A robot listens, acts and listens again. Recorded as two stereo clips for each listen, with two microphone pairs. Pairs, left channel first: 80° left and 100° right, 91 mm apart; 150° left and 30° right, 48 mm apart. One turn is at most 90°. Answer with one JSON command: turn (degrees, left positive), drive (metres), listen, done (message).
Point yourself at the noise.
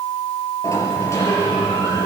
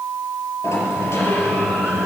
{"turn": 90}
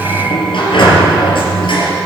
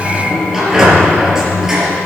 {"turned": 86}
{"turn": 55}
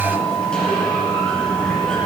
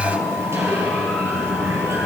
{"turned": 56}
{"done": "Facing the sliding door, 2 to 4 m away."}